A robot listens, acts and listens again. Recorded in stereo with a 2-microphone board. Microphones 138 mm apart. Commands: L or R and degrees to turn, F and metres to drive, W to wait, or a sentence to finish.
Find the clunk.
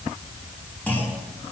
L30
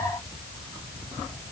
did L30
W
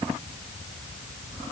I heard a clunk, but can't make it out now. It was about 15° right or 135° left.